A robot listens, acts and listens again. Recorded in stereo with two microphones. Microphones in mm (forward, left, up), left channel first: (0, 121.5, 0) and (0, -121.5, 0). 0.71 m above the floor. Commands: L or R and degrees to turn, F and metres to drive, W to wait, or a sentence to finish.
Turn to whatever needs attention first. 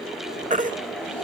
R30
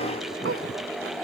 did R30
W
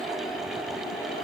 W
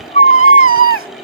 R120
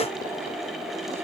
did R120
W
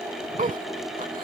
R35
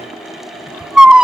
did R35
Found it: a baby crying, straight ahead.